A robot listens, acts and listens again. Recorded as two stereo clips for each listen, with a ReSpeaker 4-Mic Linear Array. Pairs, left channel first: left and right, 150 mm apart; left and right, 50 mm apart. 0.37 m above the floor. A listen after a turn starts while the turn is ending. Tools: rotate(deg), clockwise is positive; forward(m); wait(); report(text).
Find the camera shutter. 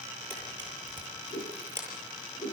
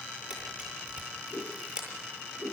rotate(15)
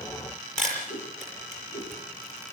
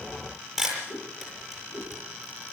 report("Facing the camera shutter.")